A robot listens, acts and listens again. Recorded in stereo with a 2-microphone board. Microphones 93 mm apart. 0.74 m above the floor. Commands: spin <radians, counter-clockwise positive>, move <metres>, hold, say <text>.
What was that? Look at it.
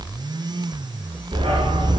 spin -1.57
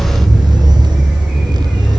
say Facing the dog barking, over 4 m away.